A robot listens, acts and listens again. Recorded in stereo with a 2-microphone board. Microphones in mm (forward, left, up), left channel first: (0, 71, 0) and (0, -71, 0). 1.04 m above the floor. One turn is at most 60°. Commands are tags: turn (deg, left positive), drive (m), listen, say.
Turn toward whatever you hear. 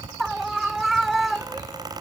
<turn deg="30"/>
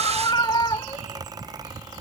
<turn deg="60"/>
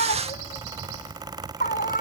<turn deg="60"/>
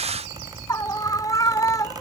<turn deg="25"/>
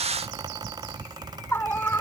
<turn deg="15"/>
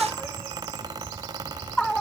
<say>Found it: a scream, straight ahead.</say>